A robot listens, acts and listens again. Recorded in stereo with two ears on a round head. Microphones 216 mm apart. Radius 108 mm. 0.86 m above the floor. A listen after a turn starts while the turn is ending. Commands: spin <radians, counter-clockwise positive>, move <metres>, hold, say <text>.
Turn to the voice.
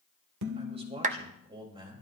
spin -0.35
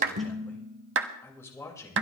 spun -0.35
spin 0.26
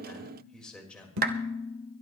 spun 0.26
say Found it: a man speaking, straight ahead.